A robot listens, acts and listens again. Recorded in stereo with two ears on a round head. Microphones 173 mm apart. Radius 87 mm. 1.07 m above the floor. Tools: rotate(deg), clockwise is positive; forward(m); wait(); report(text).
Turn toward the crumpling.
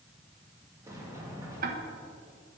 wait()
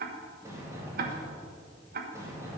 wait()
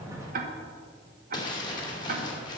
rotate(-25)
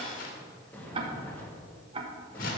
rotate(-130)
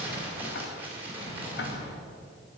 rotate(10)
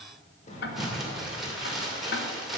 report("Found it: crumpling, straight ahead, 2 to 4 m away.")